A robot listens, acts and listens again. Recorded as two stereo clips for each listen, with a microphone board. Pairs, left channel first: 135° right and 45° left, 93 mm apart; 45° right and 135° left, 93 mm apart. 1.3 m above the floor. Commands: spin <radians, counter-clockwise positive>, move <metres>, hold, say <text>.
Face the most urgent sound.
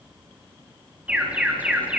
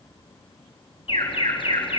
spin -0.52
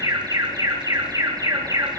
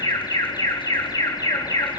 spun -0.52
say Facing the alarm.